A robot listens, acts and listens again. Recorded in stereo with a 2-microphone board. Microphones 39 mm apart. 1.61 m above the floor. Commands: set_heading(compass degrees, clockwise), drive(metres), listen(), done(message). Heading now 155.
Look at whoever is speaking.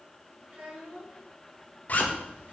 set_heading(200)
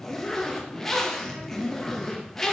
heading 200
listen()
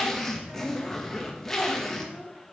set_heading(290)
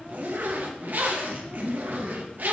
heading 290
listen()
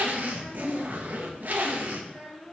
set_heading(305)
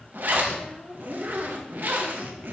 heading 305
done("Found it: a child speaking, straight ahead.")